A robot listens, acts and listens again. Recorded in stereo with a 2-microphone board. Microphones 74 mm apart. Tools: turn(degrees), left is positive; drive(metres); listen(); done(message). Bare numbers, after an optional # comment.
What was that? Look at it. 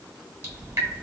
# The dripping: about 40° right or 140° right.
turn(-40)
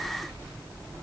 # So it is at 100° right.
turn(-100)
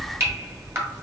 # The dripping is now 35° right.
turn(-35)
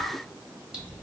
# The dripping is now 10° right.
turn(-10)
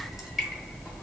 done("Found it: dripping, straight ahead, 1 to 2 m away.")